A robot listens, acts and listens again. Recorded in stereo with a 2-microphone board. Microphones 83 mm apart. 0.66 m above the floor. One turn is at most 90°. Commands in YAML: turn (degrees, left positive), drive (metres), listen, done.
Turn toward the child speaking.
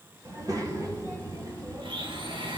turn: -50
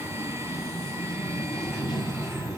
done: "Facing the child speaking."